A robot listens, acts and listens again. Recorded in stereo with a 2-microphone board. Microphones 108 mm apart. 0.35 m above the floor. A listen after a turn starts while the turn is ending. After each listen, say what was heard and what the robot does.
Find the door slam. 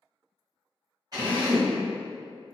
Keep listening.
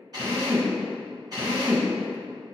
Keep listening.
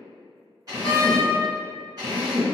The door slam: about 60° left or 120° left. Turn 60° left.
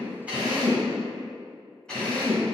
Keep listening.
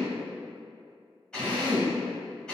I heard a door slam, but can't make it out now. It was about straight ahead or 60° left.